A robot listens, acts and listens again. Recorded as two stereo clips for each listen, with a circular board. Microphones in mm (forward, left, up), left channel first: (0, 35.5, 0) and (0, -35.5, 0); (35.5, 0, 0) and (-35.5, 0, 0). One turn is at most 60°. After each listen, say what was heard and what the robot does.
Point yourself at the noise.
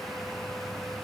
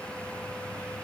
Keep listening.
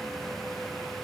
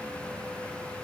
Keep listening.
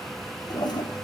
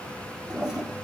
The toilet flushing: 100° left. Turn 60° left.
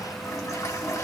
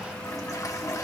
The toilet flushing is now 45° left. Turn 45° left.
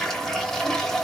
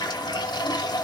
Facing the toilet flushing, under 1 m away.